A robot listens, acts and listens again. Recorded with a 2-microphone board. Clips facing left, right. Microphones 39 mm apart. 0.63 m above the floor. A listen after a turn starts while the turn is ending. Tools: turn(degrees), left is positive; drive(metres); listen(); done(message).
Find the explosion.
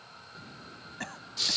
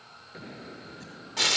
turn(degrees=-45)
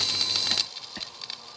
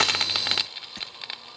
listen()
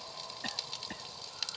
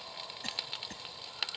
done("I heard an explosion, but can't make it out now. It was about straight ahead or 90° right.")